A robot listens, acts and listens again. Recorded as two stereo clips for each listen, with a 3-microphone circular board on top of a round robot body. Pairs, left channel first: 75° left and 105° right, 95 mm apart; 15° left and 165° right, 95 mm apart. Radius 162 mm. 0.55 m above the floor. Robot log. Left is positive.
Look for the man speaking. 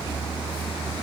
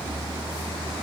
cmd idle
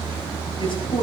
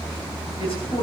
note: The man speaking: 45° left.
cmd yaw +45
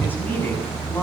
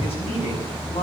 end: Found it: a man speaking, straight ahead, over 4 m away.